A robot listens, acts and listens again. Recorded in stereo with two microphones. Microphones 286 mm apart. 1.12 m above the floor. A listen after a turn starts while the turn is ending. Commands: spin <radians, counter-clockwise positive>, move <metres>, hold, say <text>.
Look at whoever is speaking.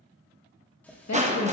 spin 1.57
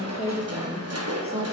spin -0.44
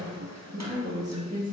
spin -0.52
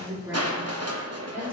say Facing the woman speaking, 2 to 4 m away.